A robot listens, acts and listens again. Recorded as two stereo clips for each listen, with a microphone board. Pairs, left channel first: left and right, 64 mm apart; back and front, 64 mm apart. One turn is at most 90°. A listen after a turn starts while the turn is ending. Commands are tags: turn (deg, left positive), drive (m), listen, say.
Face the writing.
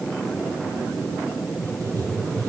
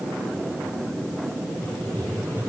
<turn deg="-90"/>
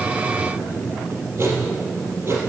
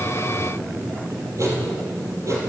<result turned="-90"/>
<turn deg="-40"/>
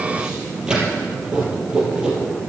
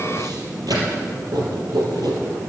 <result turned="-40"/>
<turn deg="-15"/>
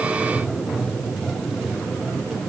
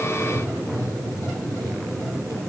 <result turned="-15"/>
<say>Found it: writing, straight ahead, 2 to 4 m away.</say>